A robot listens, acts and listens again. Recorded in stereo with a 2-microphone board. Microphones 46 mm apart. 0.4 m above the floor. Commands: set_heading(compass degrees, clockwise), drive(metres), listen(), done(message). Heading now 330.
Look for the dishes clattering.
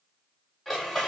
set_heading(300)
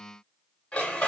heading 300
set_heading(160)
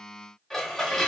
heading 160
done("Facing the dishes clattering, under 1 m away.")